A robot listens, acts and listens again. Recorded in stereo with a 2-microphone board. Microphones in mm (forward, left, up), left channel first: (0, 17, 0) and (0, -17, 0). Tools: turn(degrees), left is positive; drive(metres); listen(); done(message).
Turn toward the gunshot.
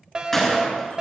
turn(degrees=30)
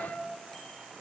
listen()
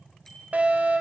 done("I heard a gunshot, but can't make it out now. It was about 20° right or 140° left.")